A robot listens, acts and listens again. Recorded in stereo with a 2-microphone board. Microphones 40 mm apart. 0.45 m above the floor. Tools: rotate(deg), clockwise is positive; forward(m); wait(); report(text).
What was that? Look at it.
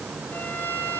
rotate(-60)
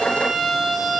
report("Facing the violin, over 4 m away.")